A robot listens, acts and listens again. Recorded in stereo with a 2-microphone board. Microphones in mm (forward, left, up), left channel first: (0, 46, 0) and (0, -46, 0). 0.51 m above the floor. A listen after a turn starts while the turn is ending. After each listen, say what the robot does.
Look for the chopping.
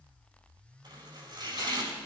Turn 50° right.
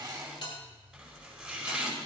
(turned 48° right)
Found it: chopping, straight ahead, over 4 m away.